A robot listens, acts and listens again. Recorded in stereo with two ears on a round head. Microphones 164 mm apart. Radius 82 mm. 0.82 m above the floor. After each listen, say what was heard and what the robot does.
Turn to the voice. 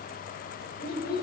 The child speaking: about 60° left or 120° left. Turn 60° left.
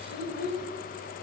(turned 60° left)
So it is at 55° left. Turn 55° left.
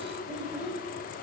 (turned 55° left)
Facing the child speaking, 2 to 4 m away.